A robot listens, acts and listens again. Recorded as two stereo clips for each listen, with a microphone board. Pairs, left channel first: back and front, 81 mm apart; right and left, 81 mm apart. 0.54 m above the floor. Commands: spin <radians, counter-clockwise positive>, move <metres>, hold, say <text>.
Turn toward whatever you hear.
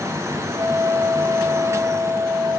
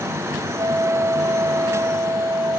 spin 0.87
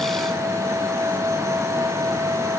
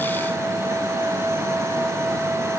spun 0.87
hold
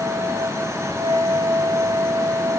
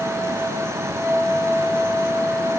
say Facing the flute.